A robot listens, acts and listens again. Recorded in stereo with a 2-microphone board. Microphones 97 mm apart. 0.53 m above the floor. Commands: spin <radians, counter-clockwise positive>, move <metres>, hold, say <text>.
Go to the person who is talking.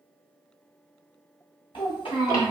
spin 1.13
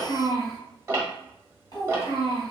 spin 0.79
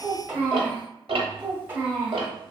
spin -0.35
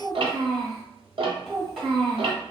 move 1.0
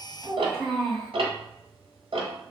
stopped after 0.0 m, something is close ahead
say Blocked. The child speaking is further on, straight ahead.